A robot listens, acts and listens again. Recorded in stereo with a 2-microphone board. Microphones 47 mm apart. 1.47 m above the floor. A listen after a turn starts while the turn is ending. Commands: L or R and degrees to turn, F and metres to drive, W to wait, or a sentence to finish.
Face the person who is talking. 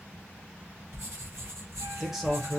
R30
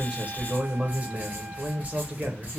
R145
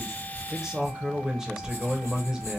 R10
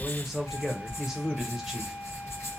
Facing the man speaking.